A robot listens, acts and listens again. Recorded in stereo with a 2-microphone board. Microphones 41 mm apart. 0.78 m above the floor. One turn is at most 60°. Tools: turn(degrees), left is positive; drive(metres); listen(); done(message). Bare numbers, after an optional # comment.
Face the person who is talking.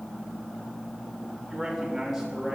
turn(-30)
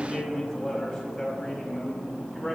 # So it is at 25° left.
turn(25)
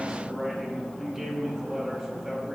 done("Found it: a man speaking, straight ahead, over 4 m away.")